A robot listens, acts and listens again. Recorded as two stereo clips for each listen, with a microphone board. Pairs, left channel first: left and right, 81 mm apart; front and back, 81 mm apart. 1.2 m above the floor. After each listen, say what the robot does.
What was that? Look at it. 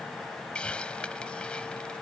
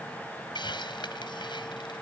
Turn 10° left.
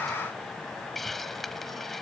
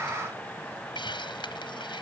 Found it: a hiss, straight ahead.